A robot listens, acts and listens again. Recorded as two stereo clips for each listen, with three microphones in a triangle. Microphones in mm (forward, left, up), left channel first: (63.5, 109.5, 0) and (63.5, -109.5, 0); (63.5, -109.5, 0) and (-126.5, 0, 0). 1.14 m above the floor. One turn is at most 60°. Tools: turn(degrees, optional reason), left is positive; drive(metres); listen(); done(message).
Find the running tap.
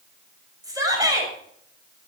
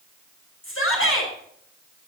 listen()
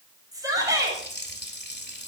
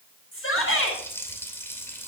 turn(degrees=50, reason="The running tap: 50° left.")
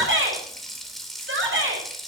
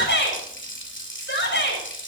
done("Found it: a running tap, straight ahead, 2 to 4 m away.")